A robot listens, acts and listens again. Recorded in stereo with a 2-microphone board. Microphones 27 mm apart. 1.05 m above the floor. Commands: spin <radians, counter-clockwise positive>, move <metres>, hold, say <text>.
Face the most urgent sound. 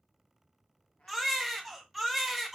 spin 0.52
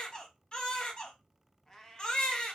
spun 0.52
spin 2.62
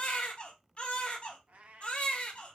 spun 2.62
spin 0.79
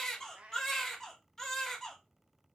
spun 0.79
spin 0.26
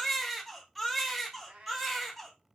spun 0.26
say Facing the baby crying, under 1 m away.